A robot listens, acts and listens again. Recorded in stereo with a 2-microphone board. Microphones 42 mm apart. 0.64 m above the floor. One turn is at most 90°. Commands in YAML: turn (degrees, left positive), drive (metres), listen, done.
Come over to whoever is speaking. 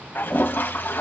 listen: true
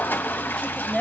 turn: 30
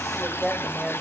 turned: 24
turn: -15
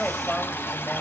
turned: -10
drive: 1.0
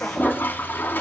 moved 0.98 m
listen: true
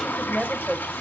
turn: -10
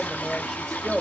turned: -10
drive: 1.0
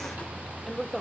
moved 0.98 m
drive: 1.0
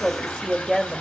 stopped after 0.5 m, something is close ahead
done: "I am next to the woman speaking."